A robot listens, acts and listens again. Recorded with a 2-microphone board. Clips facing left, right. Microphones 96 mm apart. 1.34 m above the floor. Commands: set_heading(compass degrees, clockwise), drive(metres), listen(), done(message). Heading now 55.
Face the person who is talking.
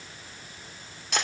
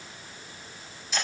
listen()
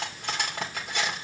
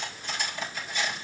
listen()
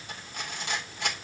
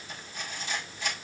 done("I can't make out anyone speaking, only cutlery clinking.")